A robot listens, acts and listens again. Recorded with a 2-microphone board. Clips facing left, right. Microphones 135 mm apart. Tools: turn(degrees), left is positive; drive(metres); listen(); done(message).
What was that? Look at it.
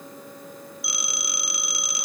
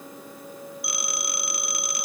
turn(degrees=-55)
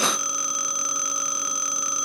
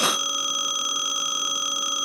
turn(degrees=-15)
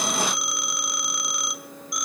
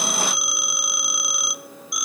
done("Facing the phone ringing, 1 to 2 m away.")